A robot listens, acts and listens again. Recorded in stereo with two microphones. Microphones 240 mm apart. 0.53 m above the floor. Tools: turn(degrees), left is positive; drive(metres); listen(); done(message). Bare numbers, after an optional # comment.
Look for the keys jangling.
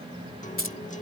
# The keys jangling: about 60° left or 120° left.
turn(60)
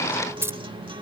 # So it is at 10° right.
turn(-10)
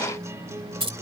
# The keys jangling is now 25° right.
turn(-25)
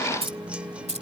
# The keys jangling is now 30° right.
turn(-30)
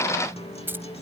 # The keys jangling is now 10° right.
turn(-10)
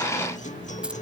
listen()
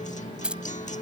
done("Found it: keys jangling, straight ahead.")